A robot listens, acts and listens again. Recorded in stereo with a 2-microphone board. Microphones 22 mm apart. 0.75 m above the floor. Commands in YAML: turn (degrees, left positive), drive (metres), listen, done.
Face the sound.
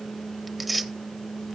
turn: -30
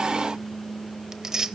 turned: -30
turn: -145
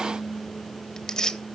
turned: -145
turn: 35
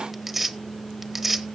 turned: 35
turn: -10
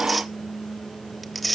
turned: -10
done: "Found it: tearing paper, straight ahead."